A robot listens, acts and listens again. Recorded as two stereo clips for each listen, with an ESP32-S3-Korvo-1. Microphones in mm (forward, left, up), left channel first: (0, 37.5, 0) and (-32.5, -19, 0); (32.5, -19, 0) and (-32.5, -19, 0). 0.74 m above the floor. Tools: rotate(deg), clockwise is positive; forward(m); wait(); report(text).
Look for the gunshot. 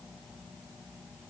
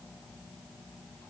wait()
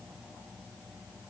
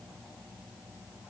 wait()
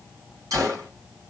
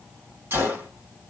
rotate(130)
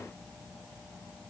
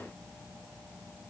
report("I heard a gunshot from this way, but can't make it out now.")